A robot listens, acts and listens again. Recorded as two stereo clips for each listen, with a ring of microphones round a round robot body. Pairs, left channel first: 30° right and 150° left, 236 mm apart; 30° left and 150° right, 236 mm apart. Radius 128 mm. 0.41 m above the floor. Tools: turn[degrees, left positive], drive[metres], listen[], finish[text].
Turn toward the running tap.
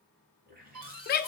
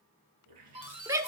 Thought: The running tap: 155° right.
Action: turn[-155]
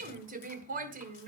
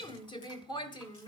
Action: listen[]
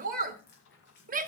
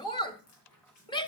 Thought: The running tap is now 15° left.
Action: turn[15]
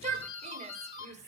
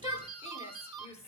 Action: listen[]
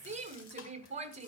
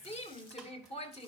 Action: listen[]
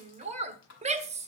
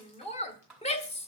Action: finish[Facing where the running tap came from. I can't hear it now.]